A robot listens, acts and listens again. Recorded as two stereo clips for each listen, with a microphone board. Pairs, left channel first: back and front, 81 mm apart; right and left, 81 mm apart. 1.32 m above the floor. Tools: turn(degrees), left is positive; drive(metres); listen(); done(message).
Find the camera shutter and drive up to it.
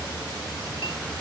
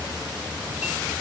listen()
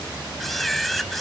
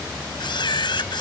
turn(degrees=-90)
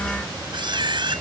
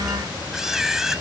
drive(metres=1.0)
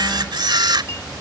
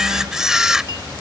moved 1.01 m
turn(degrees=10)
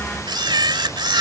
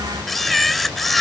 drive(metres=1.0)
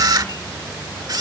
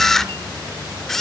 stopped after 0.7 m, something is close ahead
done("I am next to the camera shutter.")